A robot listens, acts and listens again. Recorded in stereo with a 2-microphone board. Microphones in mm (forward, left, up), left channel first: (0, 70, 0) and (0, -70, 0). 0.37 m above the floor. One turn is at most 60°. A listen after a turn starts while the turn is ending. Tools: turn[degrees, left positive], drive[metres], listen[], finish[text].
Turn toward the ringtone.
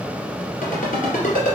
Thought: The ringtone: about 70° left or 110° left.
Action: turn[60]
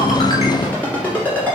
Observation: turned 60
Thought: So it is at 15° left.
Action: turn[15]
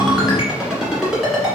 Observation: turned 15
Action: finish[Facing the ringtone.]